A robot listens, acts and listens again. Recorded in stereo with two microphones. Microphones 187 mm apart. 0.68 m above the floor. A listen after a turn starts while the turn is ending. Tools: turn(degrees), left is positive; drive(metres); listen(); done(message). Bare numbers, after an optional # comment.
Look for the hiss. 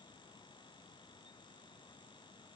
listen()
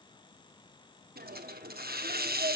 # The hiss: about 60° right or 120° right.
turn(-60)
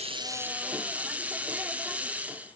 # So it is at 10° right.
turn(-10)
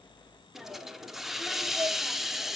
done("Found it: a hiss, straight ahead.")